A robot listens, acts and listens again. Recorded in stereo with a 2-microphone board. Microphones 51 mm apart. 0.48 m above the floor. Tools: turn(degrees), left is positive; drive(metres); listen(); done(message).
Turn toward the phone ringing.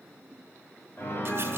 listen()
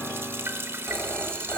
turn(degrees=20)
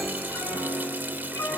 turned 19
listen()
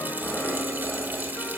listen()
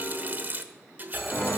done("Facing the phone ringing.")